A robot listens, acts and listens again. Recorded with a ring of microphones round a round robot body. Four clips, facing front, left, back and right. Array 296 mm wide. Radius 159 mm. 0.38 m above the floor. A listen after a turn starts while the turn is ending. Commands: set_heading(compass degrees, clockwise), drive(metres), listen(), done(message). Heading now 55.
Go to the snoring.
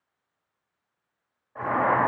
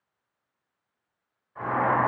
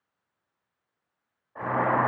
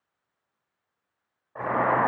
listen()
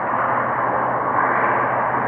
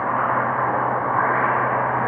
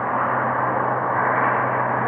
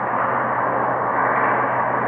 listen()
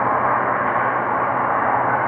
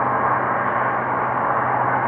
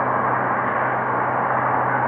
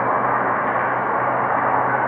done("I can't make out snoring, only boiling.")